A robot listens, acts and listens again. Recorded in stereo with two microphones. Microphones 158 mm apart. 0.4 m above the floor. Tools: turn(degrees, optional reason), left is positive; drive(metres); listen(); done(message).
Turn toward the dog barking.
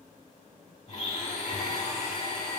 listen()
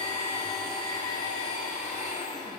listen()
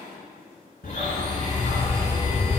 turn(degrees=90)
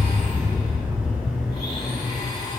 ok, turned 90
done("Facing the dog barking, 2 to 4 m away.")